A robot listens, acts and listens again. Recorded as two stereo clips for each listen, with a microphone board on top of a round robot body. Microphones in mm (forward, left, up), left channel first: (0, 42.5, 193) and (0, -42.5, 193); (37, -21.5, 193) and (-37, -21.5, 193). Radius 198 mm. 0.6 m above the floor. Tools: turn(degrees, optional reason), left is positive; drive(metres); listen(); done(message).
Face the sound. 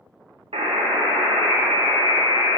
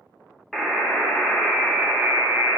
turn(degrees=-85, reason="The buzzer: 85° right.")
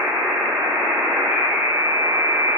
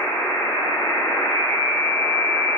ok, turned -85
turn(degrees=-25, reason="The buzzer is now 25° right.")
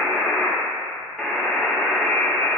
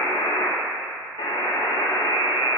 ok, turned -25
turn(degrees=10, reason="The buzzer is now 10° left.")
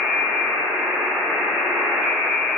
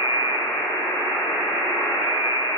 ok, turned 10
done("Facing the buzzer, under 1 m away.")